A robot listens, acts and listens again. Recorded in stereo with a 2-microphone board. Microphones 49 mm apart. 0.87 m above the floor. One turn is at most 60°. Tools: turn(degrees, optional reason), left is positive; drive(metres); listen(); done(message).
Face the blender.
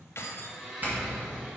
turn(degrees=-30)
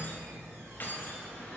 listen()
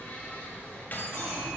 turn(degrees=25, reason="So it is at 25° left.")
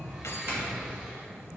listen()
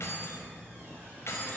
listen()
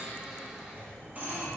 done("Found it: a blender, straight ahead, 1 to 2 m away.")